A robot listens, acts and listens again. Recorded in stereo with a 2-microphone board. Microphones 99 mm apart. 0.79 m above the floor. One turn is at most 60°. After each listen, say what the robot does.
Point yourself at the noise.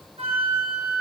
Turn 60° right.
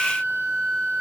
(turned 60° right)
Turn 40° right.
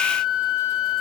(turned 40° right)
Turn 10° left.
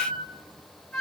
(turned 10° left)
Facing the flute.